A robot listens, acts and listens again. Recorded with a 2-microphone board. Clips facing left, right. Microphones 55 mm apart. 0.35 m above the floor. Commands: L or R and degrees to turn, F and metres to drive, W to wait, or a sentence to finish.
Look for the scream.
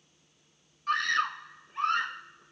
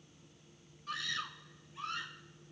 L60
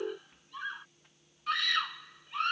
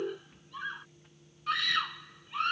Found it: a scream, straight ahead.